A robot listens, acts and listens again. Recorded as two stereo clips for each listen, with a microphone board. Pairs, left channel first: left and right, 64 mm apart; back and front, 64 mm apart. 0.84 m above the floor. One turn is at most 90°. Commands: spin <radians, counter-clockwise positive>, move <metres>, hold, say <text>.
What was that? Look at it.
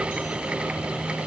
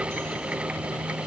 hold
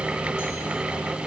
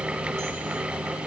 hold
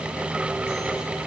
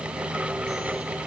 say I can't make out anything.